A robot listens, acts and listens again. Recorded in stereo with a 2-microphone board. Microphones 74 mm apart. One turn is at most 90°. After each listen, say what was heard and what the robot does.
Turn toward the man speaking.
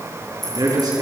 The man speaking: about 65° right or 115° right. Turn 65° right.
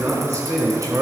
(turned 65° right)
So it is at 45° right. Turn 45° right.
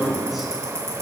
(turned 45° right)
Facing the man speaking.